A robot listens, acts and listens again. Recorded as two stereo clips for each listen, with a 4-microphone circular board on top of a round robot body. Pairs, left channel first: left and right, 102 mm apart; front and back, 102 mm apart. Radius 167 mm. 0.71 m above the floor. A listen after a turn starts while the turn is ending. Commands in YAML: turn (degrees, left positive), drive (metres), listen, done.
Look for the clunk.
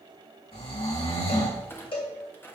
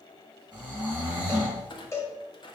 turn: 25
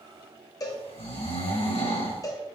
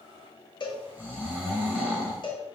done: "I heard a clunk from this way, but can't make it out now."